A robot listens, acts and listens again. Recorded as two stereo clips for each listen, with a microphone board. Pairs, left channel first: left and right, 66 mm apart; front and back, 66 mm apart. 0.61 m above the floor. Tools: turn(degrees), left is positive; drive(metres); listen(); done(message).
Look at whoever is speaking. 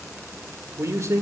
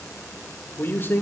turn(degrees=-55)
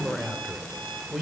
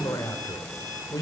turn(degrees=-10)
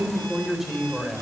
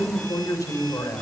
done("Found it: a man speaking, straight ahead.")